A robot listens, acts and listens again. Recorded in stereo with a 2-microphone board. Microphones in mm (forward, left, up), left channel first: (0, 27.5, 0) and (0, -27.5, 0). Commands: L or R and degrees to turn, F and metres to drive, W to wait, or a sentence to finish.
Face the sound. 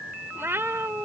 R50
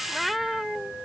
Facing the cat meowing.